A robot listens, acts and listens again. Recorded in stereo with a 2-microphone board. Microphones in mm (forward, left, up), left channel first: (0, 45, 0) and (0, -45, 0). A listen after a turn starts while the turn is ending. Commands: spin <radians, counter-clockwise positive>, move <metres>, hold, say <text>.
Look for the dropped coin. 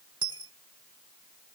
spin -1.22
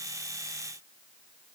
hold
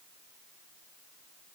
say I heard a dropped coin, but can't make it out now. It was about straight ahead or 40° right.